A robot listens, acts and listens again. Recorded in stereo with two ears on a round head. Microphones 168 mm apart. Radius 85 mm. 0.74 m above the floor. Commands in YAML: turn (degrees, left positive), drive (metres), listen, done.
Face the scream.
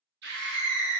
turn: -60
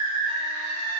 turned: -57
turn: -25
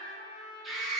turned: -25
done: "Found it: a scream, straight ahead."